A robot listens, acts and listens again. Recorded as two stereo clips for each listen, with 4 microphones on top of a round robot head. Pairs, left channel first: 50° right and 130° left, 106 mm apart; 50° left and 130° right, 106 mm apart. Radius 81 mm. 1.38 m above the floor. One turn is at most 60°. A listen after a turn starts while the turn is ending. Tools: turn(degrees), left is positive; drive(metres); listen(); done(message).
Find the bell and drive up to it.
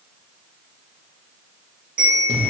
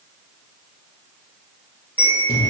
turn(degrees=60)
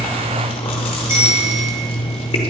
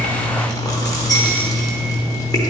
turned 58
turn(degrees=60)
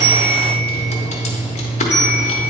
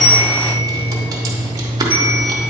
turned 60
turn(degrees=10)
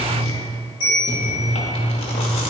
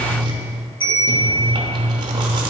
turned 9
drive(metres=1.0)
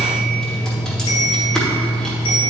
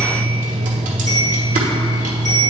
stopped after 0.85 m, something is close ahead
listen()
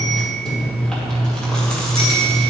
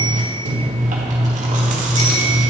listen()
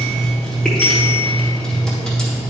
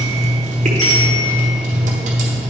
done("I heard a bell from this way, but can't make it out now. I did not reach it.")